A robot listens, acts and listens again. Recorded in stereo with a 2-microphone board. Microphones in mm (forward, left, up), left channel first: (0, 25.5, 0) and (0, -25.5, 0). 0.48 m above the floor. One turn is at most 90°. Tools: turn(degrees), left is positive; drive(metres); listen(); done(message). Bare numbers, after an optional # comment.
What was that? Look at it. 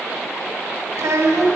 turn(-90)
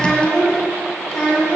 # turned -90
# So it is at 20° left.
turn(20)
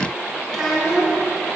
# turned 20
done("Facing the child speaking, 2 to 4 m away.")